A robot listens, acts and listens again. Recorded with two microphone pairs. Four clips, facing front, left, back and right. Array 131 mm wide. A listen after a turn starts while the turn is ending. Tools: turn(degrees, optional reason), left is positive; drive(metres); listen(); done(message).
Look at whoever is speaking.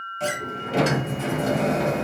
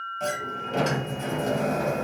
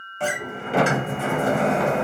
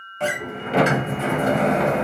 listen()
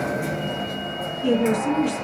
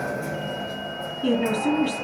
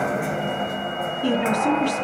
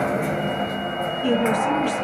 turn(degrees=160, reason="The woman speaking: 160° left.")
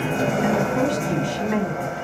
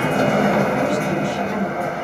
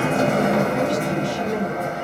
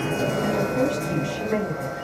turn(degrees=20, reason="The woman speaking is now 20° left.")
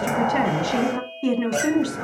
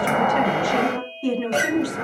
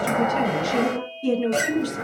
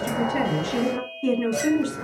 turn(degrees=10, reason="The woman speaking is now 10° left.")
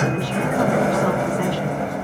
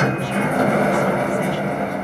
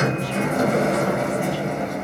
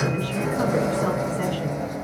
listen()
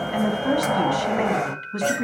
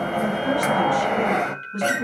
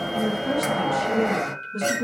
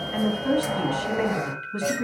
done("Facing the woman speaking.")